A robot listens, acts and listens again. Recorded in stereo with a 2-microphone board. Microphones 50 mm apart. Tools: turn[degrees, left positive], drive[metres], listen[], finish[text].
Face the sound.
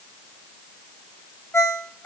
Thought: The ringtone: about 50° left or 130° left.
Action: turn[50]
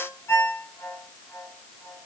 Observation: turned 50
Thought: So it is at 70° left.
Action: turn[70]
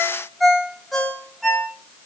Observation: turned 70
Action: finish[Facing the ringtone, 2 to 4 m away.]